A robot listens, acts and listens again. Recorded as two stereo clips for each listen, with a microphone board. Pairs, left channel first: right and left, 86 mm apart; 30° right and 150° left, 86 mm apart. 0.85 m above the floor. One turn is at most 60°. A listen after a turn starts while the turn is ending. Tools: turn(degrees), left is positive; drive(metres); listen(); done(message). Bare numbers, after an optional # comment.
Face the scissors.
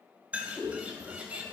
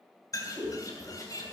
# The scissors: 165° right.
turn(-60)
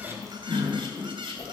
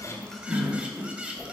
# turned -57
# The scissors is now 110° right.
turn(-60)
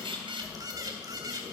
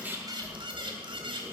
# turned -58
# The scissors is now 50° right.
turn(-50)
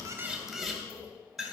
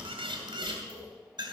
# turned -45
done("Found it: scissors, straight ahead, 2 to 4 m away.")